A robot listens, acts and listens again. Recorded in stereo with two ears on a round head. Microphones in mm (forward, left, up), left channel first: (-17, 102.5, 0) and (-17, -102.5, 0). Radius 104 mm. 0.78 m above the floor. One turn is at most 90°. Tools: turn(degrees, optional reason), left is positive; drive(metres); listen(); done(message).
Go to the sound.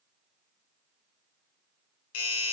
turn(degrees=90)
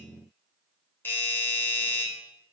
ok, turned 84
turn(degrees=10, reason="So it is at 10° left.")
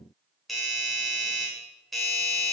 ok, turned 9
drive(metres=1.0)
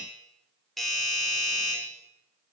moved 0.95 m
drive(metres=1.0)
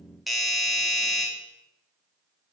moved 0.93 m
drive(metres=1.0)
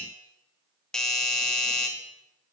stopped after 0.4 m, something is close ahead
done("I am next to the doorbell.")